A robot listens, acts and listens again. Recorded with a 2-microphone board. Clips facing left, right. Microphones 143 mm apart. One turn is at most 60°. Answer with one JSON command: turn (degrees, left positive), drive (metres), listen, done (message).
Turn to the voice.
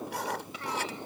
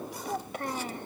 {"turn": -50}
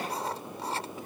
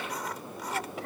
{"listen": true}
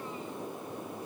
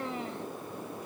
{"turn": -60}
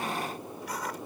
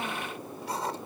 {"turn": -20}
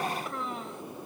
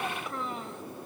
{"done": "Facing the child speaking."}